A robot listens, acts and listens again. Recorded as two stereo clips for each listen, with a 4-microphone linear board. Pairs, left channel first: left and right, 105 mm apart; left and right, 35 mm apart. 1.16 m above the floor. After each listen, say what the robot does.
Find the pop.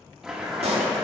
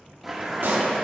Turn 90° right.
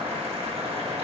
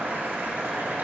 I heard a pop from this way, but can't make it out now.